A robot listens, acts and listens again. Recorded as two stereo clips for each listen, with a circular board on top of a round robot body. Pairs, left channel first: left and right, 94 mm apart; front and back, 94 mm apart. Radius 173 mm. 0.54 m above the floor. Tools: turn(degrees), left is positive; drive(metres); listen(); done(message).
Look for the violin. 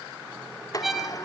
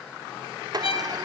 done("Facing the violin.")